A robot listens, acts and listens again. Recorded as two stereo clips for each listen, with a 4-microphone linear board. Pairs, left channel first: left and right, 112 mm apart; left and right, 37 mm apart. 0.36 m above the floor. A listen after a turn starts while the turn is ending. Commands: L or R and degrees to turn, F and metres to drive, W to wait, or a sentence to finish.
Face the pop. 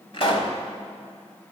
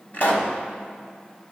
L55
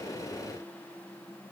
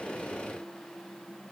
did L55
W
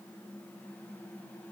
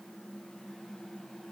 I heard a pop, but can't make it out now. It was about straight ahead or 70° left.